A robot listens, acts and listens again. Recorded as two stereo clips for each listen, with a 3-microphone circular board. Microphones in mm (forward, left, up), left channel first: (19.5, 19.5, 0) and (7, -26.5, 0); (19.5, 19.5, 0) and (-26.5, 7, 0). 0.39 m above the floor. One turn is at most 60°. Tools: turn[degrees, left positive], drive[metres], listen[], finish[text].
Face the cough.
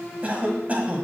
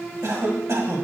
Thought: The cough: 160° right.
Action: turn[-60]
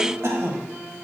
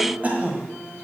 Thought: The cough is now 110° right.
Action: turn[-60]
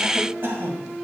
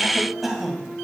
Thought: The cough is now 80° right.
Action: turn[-60]
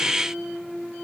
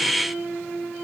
Thought: Nothing new. It was at 20° right.
Action: turn[-20]
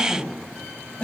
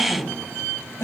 Thought: The cough is now 15° left.
Action: turn[15]
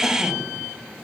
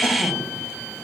Action: finish[Facing the cough, 1 to 2 m away.]